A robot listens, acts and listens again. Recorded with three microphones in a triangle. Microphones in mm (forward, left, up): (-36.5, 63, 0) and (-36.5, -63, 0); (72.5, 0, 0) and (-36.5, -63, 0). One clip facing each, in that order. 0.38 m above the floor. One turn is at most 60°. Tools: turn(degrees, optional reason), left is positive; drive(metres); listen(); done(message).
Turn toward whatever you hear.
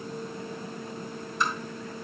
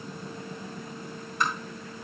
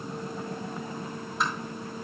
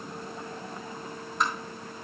turn(degrees=-60, reason="The tapping: 60° right.")
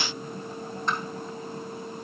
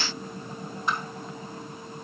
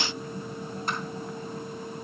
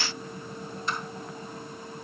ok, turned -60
turn(degrees=-10, reason="The tapping is now 10° right.")
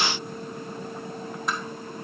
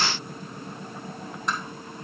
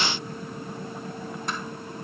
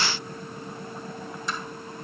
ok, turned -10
done("Found it: tapping, straight ahead, 2 to 4 m away.")